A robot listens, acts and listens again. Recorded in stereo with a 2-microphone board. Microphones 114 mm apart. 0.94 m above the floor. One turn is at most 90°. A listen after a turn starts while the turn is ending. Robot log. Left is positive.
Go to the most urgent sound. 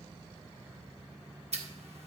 cmd idle
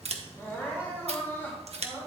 note: The crying: about 20° left or 160° left.
cmd yaw +20
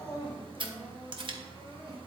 note: So it is at 140° left.
cmd yaw +90
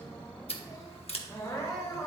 note: The crying is now 30° left.
cmd yaw +30
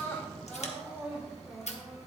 note: The crying is now 10° right.
cmd yaw -10
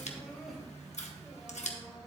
cmd idle
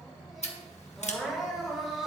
cmd fwd 1.0
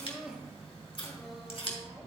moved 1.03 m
cmd fwd 1.0
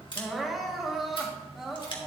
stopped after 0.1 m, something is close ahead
end: I am next to the crying.